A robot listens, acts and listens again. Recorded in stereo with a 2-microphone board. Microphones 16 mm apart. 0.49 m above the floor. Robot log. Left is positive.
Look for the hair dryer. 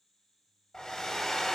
note: The hair dryer: about 45° left or 135° left.
cmd yaw +45
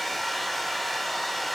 end: Facing the hair dryer, 1 to 2 m away.